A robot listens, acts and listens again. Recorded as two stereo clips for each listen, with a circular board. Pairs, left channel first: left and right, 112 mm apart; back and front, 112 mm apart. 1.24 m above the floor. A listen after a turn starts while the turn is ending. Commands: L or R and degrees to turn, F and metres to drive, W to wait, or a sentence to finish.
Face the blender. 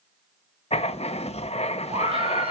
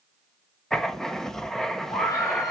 W
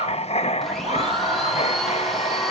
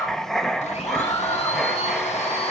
L180
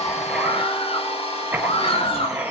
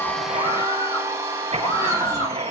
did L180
L65
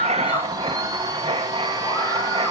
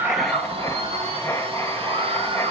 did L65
R30
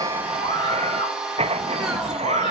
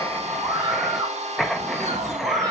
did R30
Facing the blender, 2 to 4 m away.